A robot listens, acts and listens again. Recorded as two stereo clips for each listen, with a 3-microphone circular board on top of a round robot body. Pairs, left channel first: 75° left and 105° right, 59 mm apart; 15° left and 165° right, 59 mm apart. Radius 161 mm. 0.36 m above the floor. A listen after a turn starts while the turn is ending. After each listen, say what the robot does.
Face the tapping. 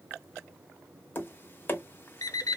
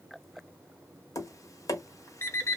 Turn 25° left.
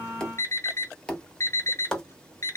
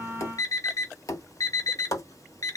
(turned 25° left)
Found it: tapping, straight ahead, 1 to 2 m away.